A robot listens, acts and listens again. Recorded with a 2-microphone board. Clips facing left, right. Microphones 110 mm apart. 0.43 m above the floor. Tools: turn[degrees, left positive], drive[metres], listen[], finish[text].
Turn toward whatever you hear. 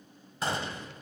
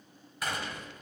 Thought: The gunshot: about 30° left or 150° left.
Action: turn[30]
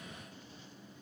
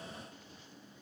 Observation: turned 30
Action: listen[]
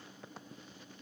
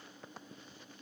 Action: finish[I heard a gunshot, but can't make it out now. It was about straight ahead or 120° left.]